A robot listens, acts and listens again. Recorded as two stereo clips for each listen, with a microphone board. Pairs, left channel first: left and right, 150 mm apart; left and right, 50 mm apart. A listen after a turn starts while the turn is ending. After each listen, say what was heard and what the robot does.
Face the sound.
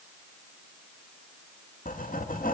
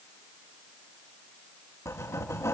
The writing: about 70° left or 110° left. Turn 70° left.
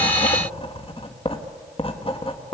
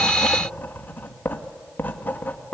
So it is at 40° left. Turn 40° left.
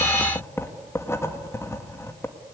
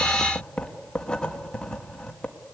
The writing is now 20° left. Turn 20° left.
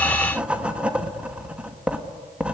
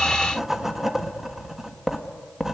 Facing the writing, 1 to 2 m away.